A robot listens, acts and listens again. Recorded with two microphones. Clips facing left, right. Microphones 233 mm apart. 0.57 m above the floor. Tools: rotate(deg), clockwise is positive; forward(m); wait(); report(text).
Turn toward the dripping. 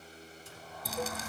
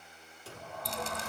rotate(-30)
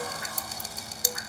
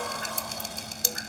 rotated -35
rotate(30)
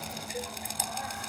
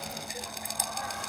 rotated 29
report("Found it: dripping, straight ahead.")